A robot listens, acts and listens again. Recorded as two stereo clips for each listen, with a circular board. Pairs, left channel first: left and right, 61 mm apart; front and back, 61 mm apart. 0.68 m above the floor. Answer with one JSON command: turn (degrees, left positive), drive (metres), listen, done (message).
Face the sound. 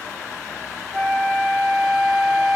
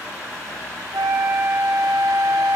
{"turn": -175}
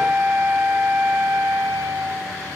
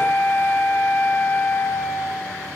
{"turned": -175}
{"turn": -50}
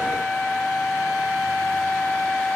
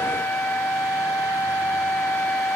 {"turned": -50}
{"done": "Facing the flute."}